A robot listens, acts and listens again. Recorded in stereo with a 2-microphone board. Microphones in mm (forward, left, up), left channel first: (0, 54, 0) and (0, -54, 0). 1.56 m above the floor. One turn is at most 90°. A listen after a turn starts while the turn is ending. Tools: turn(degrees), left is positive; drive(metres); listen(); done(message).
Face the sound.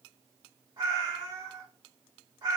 turn(degrees=-40)
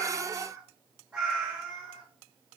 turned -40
turn(degrees=-10)
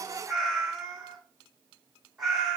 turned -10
done("Facing the cat meowing, 2 to 4 m away.")